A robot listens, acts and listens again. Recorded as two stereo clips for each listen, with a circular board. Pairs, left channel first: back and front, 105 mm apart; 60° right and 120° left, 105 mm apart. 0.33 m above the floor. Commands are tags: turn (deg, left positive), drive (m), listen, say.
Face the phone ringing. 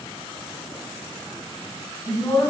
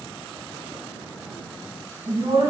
<listen/>
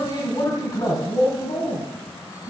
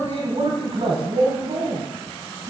<listen/>
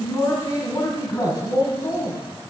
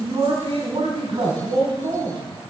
<say>I can't make out a phone ringing to turn to.</say>